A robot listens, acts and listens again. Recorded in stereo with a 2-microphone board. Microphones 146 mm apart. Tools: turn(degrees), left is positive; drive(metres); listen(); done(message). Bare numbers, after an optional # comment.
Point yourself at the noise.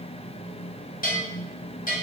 # The bell: about 60° left or 120° left.
turn(60)
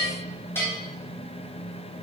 # So it is at 15° left.
turn(15)
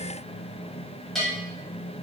done("Found it: a bell, straight ahead, 1 to 2 m away.")